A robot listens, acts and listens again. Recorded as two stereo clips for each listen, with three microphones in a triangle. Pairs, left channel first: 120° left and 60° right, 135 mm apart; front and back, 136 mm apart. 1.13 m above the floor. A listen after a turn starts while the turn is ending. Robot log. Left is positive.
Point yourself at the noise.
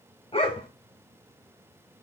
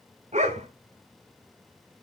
note: The dog barking: 160° left.
cmd yaw +160
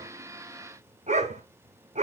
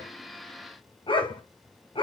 note: The dog barking is now 45° right.
cmd yaw -45
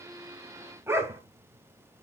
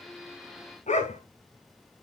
note: The dog barking is now 10° left.
cmd yaw +10
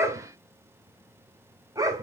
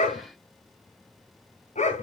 end: Facing the dog barking, 1 to 2 m away.